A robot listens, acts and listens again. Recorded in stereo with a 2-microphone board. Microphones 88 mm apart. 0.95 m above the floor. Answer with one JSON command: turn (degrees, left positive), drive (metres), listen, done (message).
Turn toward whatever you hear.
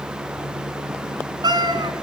{"turn": -55}
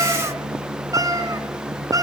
{"turn": -50}
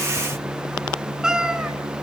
{"turn": -10}
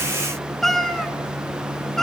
{"done": "Facing the cat meowing."}